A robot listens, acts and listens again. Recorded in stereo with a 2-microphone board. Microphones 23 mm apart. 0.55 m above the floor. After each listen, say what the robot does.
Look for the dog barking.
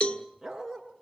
Turn 20° right.
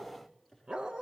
Turn 35° right.
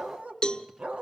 Turn 115° right.
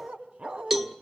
Turn 55° right.
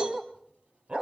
Turn 45° right.
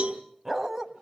Turn 15° right.
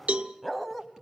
Facing the dog barking.